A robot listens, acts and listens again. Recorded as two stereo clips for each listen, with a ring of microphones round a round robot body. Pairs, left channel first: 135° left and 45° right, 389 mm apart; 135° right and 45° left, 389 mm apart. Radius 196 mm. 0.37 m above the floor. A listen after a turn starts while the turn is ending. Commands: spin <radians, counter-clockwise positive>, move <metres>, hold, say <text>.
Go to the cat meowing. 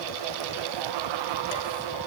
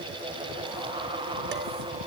hold
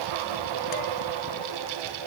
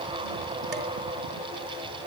hold
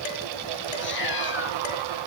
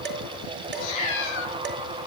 spin -2.79
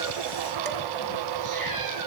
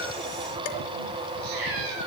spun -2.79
hold
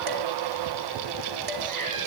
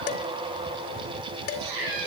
move 1.0
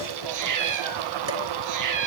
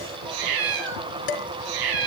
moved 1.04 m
move 1.0
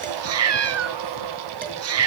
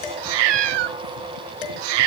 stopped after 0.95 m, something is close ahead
spin 0.17
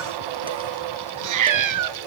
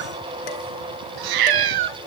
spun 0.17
say Arrived at the cat meowing, straight ahead.